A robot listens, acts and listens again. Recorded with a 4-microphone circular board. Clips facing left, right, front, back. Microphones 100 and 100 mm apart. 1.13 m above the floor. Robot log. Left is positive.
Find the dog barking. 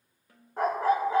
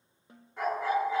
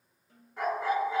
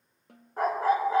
note: The dog barking: 135° left.
cmd yaw +135
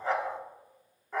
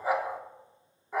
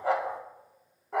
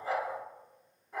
note: The dog barking is now 10° right.
cmd yaw -10
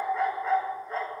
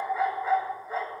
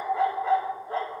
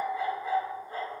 end: Facing the dog barking, 1 to 2 m away.